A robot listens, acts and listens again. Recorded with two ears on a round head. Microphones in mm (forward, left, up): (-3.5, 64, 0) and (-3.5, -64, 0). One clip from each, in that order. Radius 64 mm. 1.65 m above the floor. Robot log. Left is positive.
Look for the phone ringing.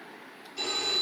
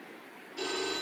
note: The phone ringing: about 30° left or 150° left.
cmd yaw +30
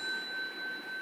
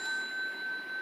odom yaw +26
note: So it is at 115° left.
cmd yaw +115
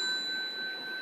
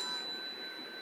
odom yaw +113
end: Facing the phone ringing.